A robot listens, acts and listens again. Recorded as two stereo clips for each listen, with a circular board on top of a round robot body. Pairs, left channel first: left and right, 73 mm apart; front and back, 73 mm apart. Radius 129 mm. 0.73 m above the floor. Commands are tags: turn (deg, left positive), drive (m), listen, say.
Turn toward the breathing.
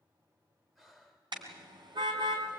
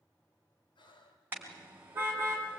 <say>Found it: breathing, straight ahead, 2 to 4 m away.</say>